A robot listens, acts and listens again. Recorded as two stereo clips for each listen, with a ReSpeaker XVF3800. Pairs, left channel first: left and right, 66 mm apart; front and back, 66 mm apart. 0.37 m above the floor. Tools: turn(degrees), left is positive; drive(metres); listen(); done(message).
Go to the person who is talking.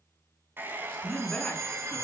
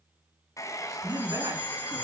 turn(degrees=165)
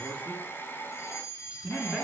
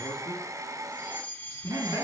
turn(degrees=-15)
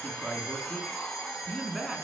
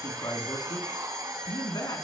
drive(metres=1.0)
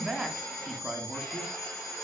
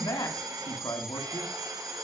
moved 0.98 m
drive(metres=1.0)
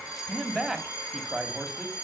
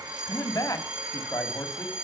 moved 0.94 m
drive(metres=1.0)
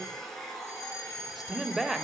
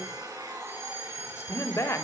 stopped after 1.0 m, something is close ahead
done("I am next to the man speaking.")